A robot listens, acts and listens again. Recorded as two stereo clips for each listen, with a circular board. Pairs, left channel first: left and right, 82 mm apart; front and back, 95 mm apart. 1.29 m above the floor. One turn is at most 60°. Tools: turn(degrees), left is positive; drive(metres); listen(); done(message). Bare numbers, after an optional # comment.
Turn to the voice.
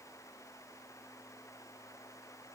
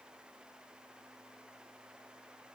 listen()
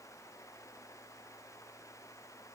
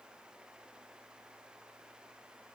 listen()
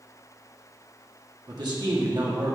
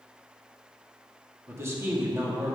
# The man speaking: 120° right.
turn(-60)
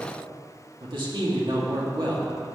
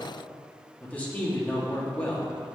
# The man speaking is now 75° right.
turn(-60)
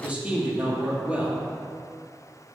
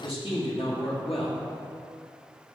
# The man speaking is now 15° right.
turn(-15)
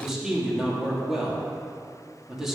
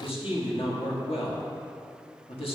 done("Found it: a man speaking, straight ahead.")